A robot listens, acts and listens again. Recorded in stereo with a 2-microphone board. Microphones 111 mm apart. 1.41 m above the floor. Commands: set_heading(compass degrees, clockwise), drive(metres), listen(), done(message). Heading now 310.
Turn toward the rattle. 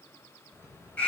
set_heading(330)
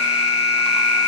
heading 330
listen()
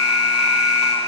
listen()
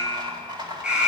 set_heading(110)
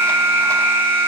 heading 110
listen()
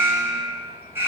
set_heading(100)
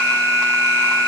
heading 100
listen()
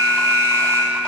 listen()
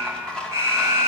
done("Found it: a rattle, straight ahead, 2 to 4 m away.")